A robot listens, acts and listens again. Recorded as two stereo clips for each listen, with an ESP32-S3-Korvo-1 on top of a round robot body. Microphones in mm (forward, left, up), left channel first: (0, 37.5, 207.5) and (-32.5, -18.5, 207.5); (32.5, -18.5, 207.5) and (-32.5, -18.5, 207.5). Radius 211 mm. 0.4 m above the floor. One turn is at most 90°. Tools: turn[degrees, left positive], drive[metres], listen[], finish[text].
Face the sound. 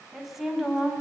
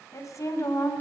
Thought: The woman speaking: 35° right.
Action: turn[-35]
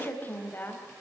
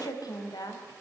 Action: finish[Found it: a woman speaking, straight ahead.]